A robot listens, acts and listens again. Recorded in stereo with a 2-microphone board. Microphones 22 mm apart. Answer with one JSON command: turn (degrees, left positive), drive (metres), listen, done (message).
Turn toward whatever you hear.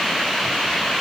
{"listen": true}
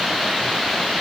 {"listen": true}
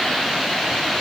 {"done": "I can't make out anything."}